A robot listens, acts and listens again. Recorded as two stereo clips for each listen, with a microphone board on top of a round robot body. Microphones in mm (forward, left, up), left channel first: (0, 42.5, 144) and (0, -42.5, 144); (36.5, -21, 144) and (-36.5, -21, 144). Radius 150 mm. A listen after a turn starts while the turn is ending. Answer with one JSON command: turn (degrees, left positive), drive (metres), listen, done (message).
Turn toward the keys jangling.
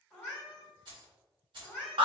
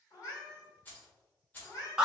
{"turn": -65}
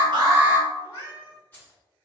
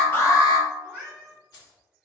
{"turn": 20}
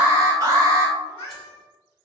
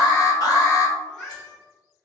{"listen": true}
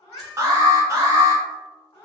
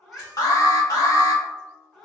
{"listen": true}
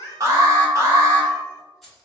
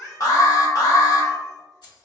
{"done": "Facing the keys jangling, 2 to 4 m away."}